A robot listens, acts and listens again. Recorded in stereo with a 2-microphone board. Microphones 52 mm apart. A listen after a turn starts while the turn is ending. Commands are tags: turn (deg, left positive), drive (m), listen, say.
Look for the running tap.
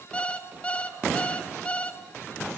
<listen/>
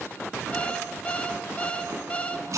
<turn deg="-75"/>
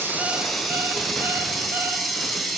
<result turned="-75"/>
<say>Facing the running tap, over 4 m away.</say>